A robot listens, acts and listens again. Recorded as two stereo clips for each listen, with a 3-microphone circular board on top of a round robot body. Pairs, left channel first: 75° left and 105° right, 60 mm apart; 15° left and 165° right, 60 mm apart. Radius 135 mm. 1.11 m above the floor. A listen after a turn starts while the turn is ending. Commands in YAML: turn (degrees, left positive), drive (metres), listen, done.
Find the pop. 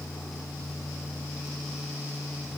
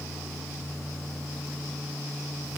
listen: true
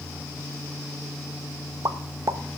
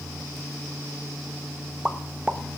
turn: -90
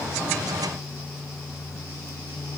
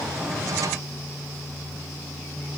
done: "Facing where the pop came from. I can't hear it now."